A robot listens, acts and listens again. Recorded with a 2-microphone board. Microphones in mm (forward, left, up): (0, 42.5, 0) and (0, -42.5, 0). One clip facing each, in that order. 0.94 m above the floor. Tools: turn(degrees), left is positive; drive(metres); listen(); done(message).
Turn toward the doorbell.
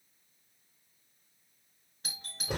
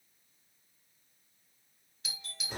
turn(degrees=45)
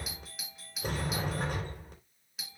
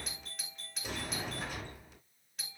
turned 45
done("Found it: a doorbell, straight ahead.")